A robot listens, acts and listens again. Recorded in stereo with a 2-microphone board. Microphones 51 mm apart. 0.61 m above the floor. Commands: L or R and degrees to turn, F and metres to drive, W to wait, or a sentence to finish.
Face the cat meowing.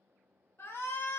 W
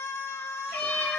L15
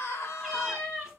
R30
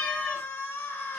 L10
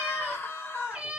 R20
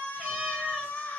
Found it: a cat meowing, straight ahead.